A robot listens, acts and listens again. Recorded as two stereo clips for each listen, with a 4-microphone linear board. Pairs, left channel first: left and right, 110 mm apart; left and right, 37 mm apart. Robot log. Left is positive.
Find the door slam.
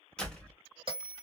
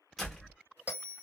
cmd yaw +30
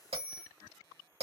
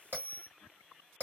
cmd idle
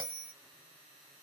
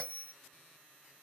end: I heard a door slam, but can't make it out now. It was about 20° right or 140° left.